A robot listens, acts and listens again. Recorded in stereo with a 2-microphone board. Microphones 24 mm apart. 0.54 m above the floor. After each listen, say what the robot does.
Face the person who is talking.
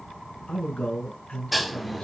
Turn 45° left.
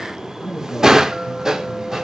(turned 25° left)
Turn 20° left.
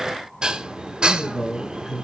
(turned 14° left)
Facing the man speaking, over 4 m away.